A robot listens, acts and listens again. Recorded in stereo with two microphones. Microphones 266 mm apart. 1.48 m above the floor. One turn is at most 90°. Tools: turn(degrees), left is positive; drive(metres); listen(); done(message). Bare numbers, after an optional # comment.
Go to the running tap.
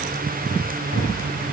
listen()
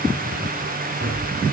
listen()
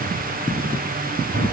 done("I can't make out a running tap to turn to.")